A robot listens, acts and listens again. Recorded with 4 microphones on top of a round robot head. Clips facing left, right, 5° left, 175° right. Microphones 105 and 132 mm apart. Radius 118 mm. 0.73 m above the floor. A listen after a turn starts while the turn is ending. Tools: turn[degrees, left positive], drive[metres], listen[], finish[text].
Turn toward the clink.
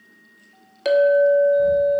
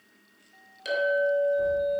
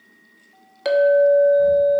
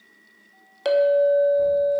Thought: The clink: 105° left.
Action: turn[105]
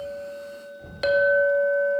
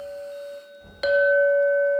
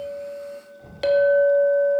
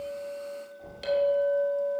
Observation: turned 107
Action: finish[Facing the clink.]